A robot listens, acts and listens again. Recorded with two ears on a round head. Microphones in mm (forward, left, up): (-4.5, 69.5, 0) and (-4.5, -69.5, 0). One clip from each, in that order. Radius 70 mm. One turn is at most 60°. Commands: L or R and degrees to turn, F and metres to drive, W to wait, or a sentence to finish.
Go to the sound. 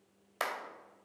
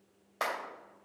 L60
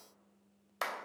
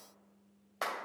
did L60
L55
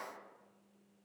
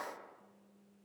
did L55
W
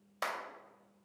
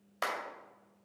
F1.0
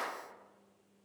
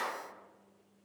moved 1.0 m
W
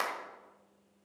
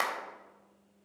F1.0
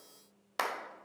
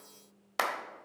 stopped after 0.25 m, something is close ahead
I am next to the clap.